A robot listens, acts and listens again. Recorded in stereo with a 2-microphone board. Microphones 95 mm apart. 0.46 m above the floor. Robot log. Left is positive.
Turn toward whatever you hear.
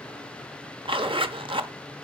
note: The zipper: about 60° right or 120° right.
cmd yaw -60
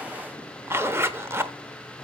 note: So it is at 30° right.
cmd yaw -30
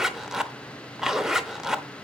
end: Facing the zipper, under 1 m away.